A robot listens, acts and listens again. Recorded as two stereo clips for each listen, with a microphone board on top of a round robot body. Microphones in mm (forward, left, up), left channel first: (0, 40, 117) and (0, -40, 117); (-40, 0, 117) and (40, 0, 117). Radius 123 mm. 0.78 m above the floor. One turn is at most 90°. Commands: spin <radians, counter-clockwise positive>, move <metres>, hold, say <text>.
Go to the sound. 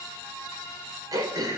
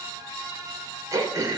spin -0.87
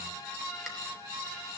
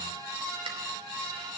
hold
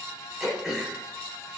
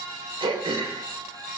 move 1.0
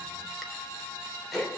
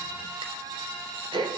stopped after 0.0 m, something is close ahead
say Blocked. The throat clearing is further on, straight ahead.